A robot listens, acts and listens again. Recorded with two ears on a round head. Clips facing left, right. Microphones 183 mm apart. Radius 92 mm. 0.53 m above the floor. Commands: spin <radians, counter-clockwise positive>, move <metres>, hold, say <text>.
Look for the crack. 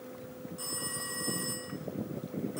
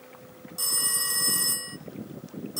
hold
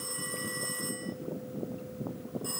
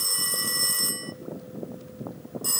hold
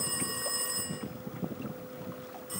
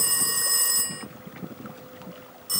say I can't make out a crack to turn to.